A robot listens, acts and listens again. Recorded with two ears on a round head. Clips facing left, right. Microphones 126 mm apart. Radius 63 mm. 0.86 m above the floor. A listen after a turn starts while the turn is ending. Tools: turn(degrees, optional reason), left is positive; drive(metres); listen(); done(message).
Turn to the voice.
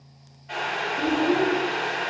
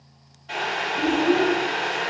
turn(degrees=-45, reason="The child speaking: about 45° right or 135° right.")
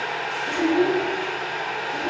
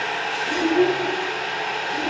done("Found it: a child speaking, straight ahead, under 1 m away.")